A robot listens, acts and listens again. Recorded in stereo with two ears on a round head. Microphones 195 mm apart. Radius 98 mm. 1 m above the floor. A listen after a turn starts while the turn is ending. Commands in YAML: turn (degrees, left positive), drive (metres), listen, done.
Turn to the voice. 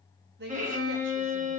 turn: -50
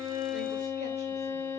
listen: true
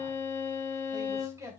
turn: -15
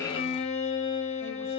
listen: true
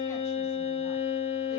listen: true
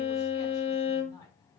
turn: 15
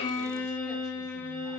listen: true
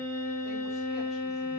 listen: true
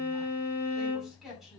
done: "Found it: a man speaking, straight ahead, 2 to 4 m away."